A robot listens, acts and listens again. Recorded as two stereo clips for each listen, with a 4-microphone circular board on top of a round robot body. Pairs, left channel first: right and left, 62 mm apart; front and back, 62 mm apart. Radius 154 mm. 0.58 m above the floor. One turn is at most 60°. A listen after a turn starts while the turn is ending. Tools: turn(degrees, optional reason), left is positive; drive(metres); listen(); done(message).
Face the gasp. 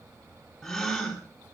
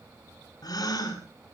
done("Facing the gasp, over 4 m away.")